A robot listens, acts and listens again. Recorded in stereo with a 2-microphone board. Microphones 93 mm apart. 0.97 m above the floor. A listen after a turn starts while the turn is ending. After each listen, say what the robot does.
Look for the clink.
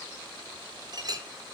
Turn 45° right.
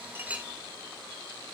Keep listening.
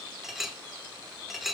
Facing the clink.